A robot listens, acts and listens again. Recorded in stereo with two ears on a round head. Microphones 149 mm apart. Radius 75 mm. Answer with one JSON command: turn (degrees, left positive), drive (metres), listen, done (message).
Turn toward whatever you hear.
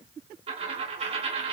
{"turn": -35}
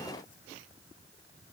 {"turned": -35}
{"listen": true}
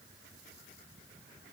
{"done": "I heard a dropped coin, but can't make it out now. It was about straight ahead or 110° right."}